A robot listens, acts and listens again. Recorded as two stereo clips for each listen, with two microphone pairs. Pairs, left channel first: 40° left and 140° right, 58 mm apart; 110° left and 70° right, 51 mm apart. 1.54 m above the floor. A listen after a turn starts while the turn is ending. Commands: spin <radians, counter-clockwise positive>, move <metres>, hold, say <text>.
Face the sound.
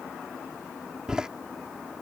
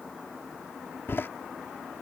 spin 2.53
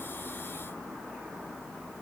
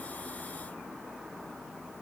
say Facing where the door slam came from. I can't hear it now.